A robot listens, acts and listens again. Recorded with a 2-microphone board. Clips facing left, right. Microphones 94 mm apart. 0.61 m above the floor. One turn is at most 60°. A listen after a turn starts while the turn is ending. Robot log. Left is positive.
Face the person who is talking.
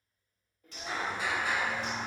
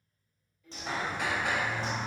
note: The child speaking: about 40° left or 140° left.
cmd yaw +40
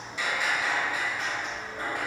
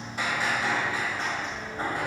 cmd idle
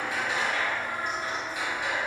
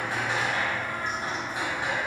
cmd idle
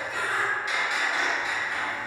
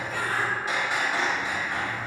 end: I heard a child speaking, but can't make it out now. It was about straight ahead or 100° left.